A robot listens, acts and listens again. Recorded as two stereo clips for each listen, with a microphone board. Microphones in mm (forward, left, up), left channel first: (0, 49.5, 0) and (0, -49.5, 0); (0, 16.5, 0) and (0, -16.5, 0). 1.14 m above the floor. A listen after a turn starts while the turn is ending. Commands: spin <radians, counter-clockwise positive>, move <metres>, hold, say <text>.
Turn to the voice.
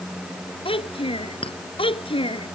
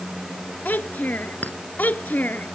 spin 1.13
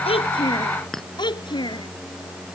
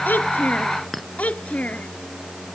spin 0.87
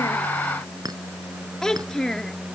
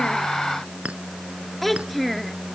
say Found it: a child speaking, straight ahead.